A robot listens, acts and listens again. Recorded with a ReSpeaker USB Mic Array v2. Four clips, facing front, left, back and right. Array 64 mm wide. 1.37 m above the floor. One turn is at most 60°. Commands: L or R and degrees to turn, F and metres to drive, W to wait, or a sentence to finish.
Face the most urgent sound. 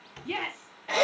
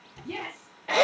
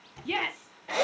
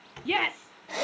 R60
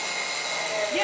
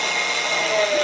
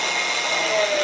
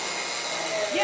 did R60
R35
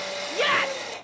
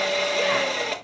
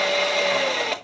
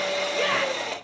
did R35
W
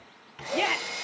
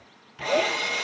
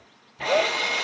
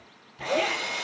Facing where the shout came from. I can't hear it now.